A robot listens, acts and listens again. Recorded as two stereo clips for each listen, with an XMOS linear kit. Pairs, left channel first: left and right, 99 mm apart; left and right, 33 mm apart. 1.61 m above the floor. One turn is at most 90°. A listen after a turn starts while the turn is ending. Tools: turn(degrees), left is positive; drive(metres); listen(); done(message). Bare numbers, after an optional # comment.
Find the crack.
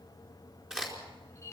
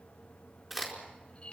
turn(-30)
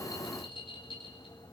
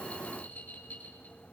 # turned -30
listen()
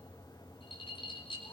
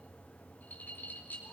done("I heard a crack, but can't make it out now. It was about 25° left or 145° right.")